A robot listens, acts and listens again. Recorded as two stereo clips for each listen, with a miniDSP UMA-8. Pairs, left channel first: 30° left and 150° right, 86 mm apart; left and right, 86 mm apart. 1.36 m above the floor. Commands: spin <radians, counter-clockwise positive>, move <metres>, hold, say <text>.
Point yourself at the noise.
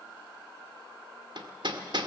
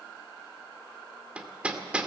spin -2.88
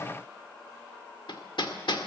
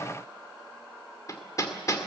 spin 0.79
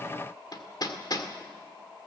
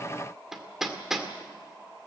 say Facing the hammering.